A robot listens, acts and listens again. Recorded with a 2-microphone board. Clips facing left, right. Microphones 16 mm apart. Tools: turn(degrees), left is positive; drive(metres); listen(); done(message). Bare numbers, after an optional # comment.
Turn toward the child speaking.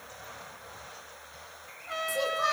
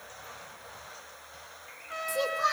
turn(30)
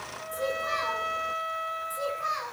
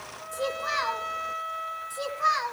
# So it is at 30° right.
turn(-30)
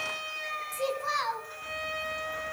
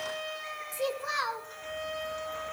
done("Facing the child speaking, 2 to 4 m away.")